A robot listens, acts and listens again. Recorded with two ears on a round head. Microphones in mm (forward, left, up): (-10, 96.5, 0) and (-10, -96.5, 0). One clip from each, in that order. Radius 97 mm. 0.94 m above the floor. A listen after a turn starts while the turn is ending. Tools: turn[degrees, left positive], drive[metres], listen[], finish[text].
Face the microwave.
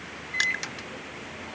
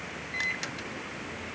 Action: turn[30]
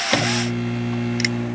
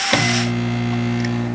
Thought: So it is at 20° right.
Action: turn[-20]
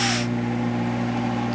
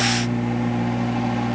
Action: finish[Facing the microwave.]